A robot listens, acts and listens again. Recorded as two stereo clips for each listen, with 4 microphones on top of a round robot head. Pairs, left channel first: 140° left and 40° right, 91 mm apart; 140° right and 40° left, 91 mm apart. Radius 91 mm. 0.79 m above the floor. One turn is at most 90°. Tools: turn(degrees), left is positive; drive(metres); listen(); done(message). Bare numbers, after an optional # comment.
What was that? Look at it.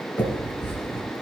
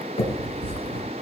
# The finger snap: 155° right.
turn(-90)
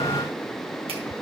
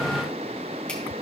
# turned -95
# Nothing new. It was at 60° right.
turn(-60)
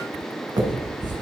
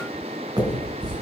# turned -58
done("Facing the finger snap, 2 to 4 m away.")